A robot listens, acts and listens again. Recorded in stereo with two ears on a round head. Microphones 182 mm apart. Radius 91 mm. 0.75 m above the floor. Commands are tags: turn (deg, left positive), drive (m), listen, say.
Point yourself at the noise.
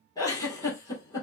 <turn deg="15"/>
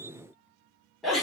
<say>Found it: a giggle, straight ahead, 1 to 2 m away.</say>